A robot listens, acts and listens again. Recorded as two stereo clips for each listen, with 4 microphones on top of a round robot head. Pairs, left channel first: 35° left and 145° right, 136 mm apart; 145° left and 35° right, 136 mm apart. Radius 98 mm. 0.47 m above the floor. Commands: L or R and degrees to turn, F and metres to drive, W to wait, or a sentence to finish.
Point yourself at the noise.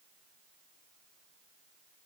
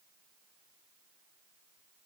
W
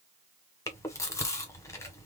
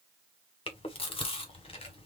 L100
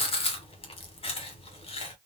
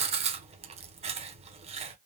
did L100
Found it: chewing, straight ahead, 1 to 2 m away.